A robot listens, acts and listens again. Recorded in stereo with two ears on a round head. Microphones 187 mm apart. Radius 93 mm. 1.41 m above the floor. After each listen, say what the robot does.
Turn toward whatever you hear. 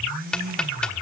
Turn 30° left.
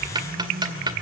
Turn 25° right.
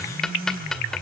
Found it: ticking, straight ahead, 1 to 2 m away.